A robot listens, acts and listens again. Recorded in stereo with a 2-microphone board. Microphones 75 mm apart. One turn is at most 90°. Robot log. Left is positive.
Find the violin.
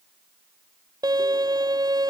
note: The violin: about 60° right or 120° right.
cmd yaw -60
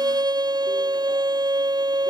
note: So it is at 65° right.
cmd yaw -65
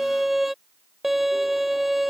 end: Facing the violin.